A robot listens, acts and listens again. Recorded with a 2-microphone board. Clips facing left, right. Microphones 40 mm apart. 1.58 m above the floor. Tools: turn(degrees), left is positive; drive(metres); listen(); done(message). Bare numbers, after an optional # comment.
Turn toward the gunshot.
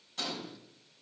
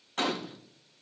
# The gunshot: about 50° right or 130° right.
turn(-50)
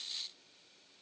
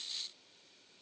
listen()
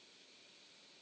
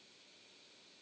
done("I heard a gunshot, but can't make it out now. It was about straight ahead or 80° right.")